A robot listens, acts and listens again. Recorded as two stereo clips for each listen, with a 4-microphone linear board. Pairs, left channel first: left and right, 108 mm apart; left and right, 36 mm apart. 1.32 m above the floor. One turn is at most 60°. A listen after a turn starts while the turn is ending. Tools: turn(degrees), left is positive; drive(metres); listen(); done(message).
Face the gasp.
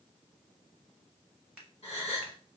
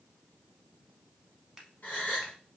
turn(degrees=60)
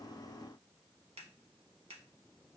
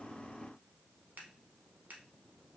listen()
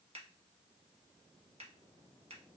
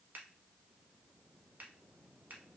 done("I heard a gasp, but can't make it out now. It was about 10° left or 50° left.")